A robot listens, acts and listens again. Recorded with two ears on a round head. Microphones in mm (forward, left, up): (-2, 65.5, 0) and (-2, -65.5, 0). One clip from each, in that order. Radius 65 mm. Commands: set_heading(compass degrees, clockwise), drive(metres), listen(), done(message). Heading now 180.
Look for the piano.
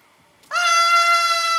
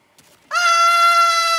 listen()
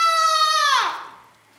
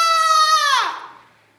listen()
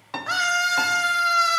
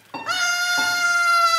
set_heading(140)
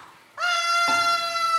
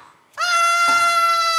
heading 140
listen()
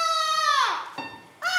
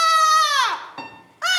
done("Facing the piano.")